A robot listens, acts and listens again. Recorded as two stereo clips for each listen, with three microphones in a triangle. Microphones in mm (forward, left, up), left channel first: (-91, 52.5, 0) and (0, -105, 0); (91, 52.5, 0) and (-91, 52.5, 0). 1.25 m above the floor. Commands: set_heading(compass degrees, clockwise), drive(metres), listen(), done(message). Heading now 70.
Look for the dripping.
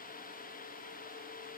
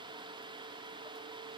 listen()
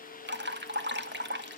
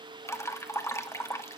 set_heading(145)
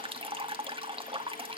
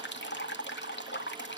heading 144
done("Facing the dripping, 2 to 4 m away.")